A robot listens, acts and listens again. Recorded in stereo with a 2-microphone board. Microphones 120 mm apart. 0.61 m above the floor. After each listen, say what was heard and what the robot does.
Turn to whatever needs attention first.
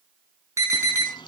The alarm: about 25° right or 155° right. Turn 25° right.
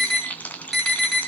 Facing the alarm.